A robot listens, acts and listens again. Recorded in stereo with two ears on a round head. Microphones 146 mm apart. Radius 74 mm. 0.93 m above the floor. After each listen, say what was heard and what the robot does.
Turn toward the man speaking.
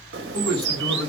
Turn 30° left.
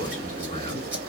So it is at 145° left. Turn 145° left.
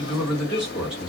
Found it: a man speaking, straight ahead, 2 to 4 m away.